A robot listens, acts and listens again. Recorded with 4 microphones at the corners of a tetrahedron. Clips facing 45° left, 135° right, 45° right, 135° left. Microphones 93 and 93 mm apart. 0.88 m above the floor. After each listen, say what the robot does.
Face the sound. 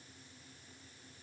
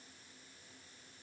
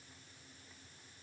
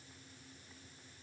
Keep listening.
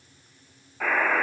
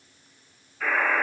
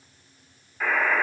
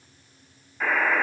Turn 40° left.
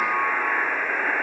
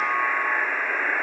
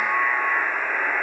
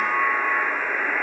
Turn 10° right.
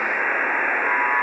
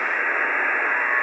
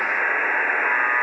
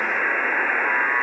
Found it: a buzzer, straight ahead, 2 to 4 m away.